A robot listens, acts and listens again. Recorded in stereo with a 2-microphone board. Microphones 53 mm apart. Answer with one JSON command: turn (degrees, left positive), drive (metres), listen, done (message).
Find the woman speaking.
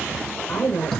{"turn": 40}
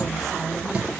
{"listen": true}
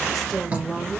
{"done": "Found it: a woman speaking, straight ahead, 2 to 4 m away."}